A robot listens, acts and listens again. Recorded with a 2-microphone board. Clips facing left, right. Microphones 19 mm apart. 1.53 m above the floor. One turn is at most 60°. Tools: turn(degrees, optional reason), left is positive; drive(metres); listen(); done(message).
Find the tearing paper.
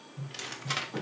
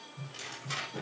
turn(degrees=30, reason="The tearing paper: about 30° left or 150° left.")
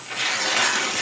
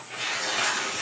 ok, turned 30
turn(degrees=60, reason="So it is at 120° left.")
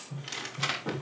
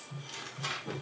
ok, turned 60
turn(degrees=60, reason="The tearing paper is now 70° left.")
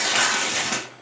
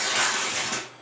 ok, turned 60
turn(degrees=25, reason="The tearing paper is now 25° left.")
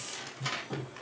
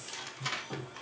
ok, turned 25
done("Found it: tearing paper, straight ahead, 2 to 4 m away.")